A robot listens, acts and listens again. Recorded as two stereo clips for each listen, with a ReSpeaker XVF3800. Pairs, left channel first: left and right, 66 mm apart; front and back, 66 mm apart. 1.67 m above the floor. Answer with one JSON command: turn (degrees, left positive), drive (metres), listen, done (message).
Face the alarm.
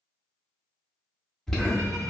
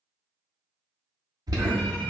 {"turn": 170}
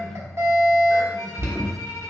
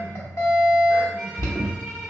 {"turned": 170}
{"turn": -45}
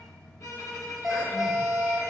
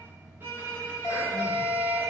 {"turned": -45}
{"done": "Facing the alarm, under 1 m away."}